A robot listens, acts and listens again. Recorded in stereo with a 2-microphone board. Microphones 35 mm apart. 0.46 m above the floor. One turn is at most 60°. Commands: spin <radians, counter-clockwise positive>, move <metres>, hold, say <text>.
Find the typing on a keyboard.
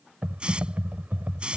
spin -0.96
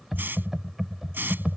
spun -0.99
say Found it: typing on a keyboard, straight ahead.